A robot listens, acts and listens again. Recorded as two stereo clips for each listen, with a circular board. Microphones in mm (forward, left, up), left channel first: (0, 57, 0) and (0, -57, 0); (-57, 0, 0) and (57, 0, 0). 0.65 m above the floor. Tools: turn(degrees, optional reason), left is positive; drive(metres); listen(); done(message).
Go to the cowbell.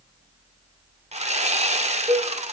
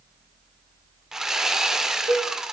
turn(degrees=-45, reason="The cowbell: 45° right.")
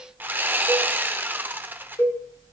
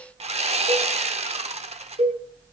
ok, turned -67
turn(degrees=20, reason="The cowbell is now 20° left.")
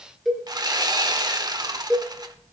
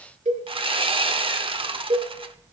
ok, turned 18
drive(metres=1.0)
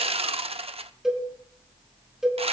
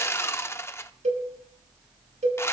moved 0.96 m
drive(metres=1.0)
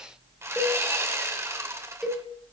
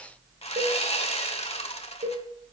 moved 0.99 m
drive(metres=1.0)
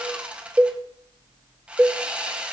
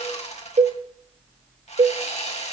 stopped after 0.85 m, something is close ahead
turn(degrees=-15, reason="The cowbell is now 15° right.")
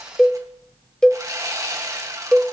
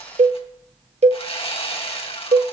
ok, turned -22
done("I am next to the cowbell.")